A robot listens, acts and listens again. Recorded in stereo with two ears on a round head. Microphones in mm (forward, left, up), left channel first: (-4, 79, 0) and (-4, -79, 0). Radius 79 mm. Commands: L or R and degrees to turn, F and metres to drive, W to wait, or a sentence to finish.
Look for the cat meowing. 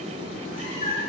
L40
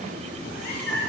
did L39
L125
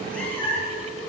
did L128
L15
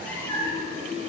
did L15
L15
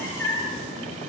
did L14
L15
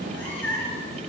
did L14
L10
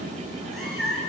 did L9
Facing the cat meowing, 1 to 2 m away.